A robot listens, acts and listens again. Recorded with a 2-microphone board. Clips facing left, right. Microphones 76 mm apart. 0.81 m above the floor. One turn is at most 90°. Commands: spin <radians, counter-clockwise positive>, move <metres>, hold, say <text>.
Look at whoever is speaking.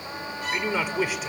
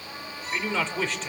spin 0.52
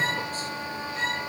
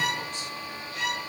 hold
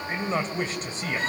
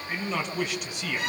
spin 1.57
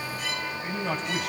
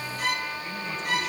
spin 1.13
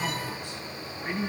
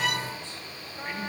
spin 0.26
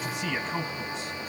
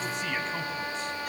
say Found it: a man speaking, straight ahead.